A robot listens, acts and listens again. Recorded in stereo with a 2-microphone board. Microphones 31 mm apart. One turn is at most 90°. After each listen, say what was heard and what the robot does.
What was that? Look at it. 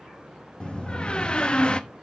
The door slam: about 30° left or 150° left. Turn 30° left.
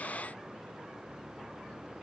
Keep listening.
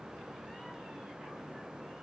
I heard a door slam, but can't make it out now. It was about straight ahead or 120° left.